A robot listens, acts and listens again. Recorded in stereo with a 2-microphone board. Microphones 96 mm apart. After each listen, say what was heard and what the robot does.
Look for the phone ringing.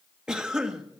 Keep listening.
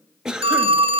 The phone ringing: about 70° right or 110° right. Turn 70° right.
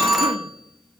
Found it: a phone ringing, straight ahead.